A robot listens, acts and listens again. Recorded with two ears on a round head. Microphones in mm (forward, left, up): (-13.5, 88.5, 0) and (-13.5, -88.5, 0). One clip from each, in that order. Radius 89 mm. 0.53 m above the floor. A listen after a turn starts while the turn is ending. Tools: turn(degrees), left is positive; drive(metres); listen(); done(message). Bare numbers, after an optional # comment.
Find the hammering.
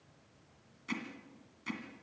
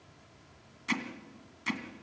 # The hammering: about 30° right or 150° right.
turn(-30)
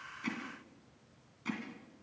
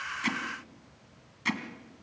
# So it is at 115° right.
turn(-115)
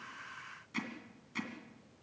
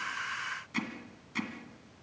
done("Found it: hammering, straight ahead, 2 to 4 m away.")